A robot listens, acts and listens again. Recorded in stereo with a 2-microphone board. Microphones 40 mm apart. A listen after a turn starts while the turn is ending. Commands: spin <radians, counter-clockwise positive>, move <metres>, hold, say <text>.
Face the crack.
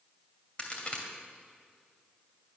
spin 0.52
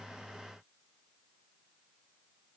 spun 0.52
hold
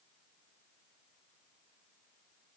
say I heard a crack, but can't make it out now. It was about straight ahead or 120° left.